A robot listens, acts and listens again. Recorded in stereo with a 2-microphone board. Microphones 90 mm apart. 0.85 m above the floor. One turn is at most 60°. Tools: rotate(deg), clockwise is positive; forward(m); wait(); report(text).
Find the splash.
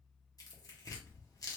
wait()
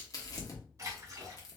rotate(35)
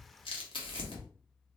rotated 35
wait()
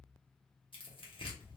report("I heard a splash, but can't make it out now. It was about straight ahead or 110° right.")